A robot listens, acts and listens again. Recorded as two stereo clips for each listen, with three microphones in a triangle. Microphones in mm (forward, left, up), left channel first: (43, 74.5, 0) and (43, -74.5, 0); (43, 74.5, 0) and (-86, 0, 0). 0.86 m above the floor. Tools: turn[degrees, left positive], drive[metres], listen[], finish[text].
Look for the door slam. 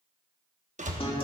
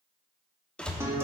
Thought: The door slam: 55° right.
Action: turn[-55]
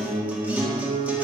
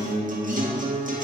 Action: finish[Facing where the door slam came from. I can't hear it now.]